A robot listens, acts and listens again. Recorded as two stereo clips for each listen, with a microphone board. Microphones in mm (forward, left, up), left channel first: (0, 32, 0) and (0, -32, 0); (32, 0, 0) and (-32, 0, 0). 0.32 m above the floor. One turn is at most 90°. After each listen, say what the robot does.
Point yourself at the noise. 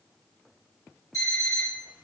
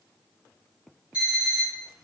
Turn 90° left.
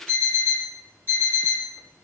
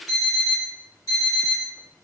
Turn 35° left.
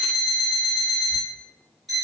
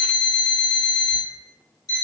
Found it: an alarm clock, straight ahead, 1 to 2 m away.